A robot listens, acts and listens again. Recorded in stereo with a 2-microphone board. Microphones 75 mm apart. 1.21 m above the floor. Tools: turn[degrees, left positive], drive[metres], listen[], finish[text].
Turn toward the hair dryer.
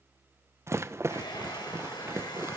Action: turn[90]
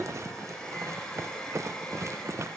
Thought: So it is at 10° left.
Action: turn[10]
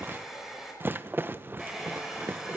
Action: finish[Facing the hair dryer, over 4 m away.]